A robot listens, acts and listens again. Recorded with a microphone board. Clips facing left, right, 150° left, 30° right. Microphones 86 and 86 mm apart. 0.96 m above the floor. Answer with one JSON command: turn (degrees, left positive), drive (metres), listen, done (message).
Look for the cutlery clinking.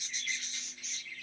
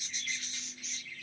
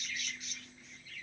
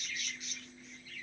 {"listen": true}
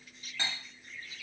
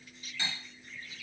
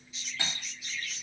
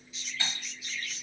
{"turn": 140}
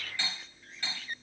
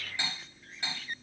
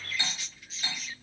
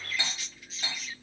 {"turn": -20}
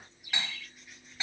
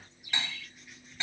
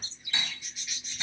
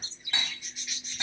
{"done": "Found it: cutlery clinking, straight ahead."}